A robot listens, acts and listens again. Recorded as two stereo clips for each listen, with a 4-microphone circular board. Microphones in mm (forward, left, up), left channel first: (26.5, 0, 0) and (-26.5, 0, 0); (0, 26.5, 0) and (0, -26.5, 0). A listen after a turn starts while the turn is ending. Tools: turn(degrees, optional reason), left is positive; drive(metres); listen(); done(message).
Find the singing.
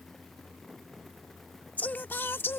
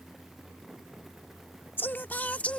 turn(degrees=25, reason="The singing: 25° left.")
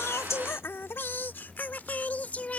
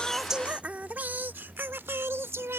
turn(degrees=-60, reason="The singing is now 60° right.")
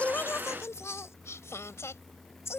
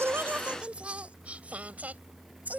turn(degrees=-30, reason="The singing is now 30° right.")
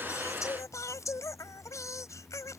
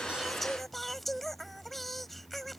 done("Found it: singing, straight ahead.")